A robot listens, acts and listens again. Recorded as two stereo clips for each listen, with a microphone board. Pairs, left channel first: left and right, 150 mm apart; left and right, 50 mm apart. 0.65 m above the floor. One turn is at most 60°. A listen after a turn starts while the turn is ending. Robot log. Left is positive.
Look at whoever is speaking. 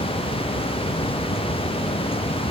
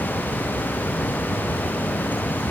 cmd idle
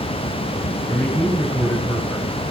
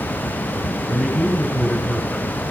cmd yaw +30
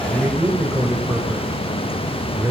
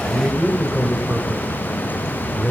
note: So it is at 15° right.
cmd yaw -15
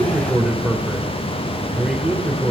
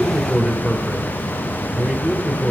end: Found it: a man speaking, straight ahead, 2 to 4 m away.